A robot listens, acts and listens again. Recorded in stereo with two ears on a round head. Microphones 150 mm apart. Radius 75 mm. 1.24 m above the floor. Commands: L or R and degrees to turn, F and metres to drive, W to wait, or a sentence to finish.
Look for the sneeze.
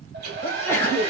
L30
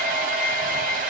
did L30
W
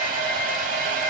I heard a sneeze, but can't make it out now. It was about 15° right or 135° left.